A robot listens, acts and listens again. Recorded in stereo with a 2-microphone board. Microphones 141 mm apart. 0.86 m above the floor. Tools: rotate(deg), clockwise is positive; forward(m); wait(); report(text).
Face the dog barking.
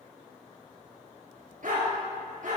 rotate(65)
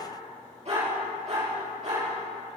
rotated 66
rotate(55)
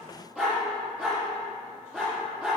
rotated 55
report("Found it: a dog barking, straight ahead.")